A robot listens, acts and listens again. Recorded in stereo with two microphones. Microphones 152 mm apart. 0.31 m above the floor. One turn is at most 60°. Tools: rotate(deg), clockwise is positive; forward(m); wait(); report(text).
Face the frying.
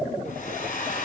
wait()
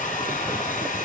wait()
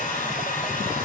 report("I can't make out frying, only a hair dryer.")